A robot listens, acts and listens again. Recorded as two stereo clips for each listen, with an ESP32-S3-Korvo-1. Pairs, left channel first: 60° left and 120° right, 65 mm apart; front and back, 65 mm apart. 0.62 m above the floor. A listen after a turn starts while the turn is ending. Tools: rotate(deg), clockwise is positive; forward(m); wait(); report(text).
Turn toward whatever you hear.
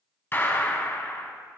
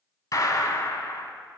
rotate(-10)
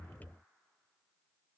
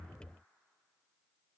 report("Facing where the gunshot came from. I can't hear it now.")